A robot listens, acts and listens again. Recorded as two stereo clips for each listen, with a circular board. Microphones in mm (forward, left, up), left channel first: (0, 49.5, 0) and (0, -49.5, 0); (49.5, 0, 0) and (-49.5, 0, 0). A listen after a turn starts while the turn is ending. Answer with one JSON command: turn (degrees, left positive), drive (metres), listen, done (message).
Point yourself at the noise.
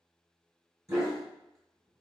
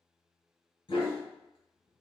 {"turn": -35}
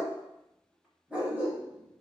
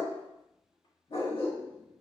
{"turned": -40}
{"turn": -20}
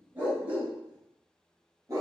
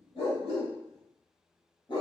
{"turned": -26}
{"turn": -35}
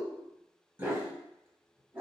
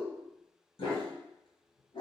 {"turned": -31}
{"turn": -20}
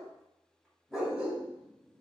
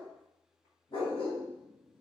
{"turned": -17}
{"done": "Found it: a dog barking, straight ahead."}